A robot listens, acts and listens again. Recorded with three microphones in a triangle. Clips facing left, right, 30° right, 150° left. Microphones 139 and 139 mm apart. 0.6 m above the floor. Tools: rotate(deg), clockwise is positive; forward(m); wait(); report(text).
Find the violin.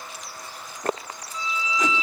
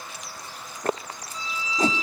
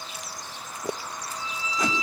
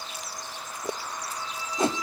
rotate(40)
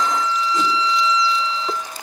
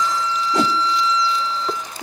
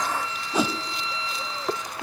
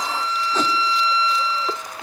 report("Found it: a violin, straight ahead.")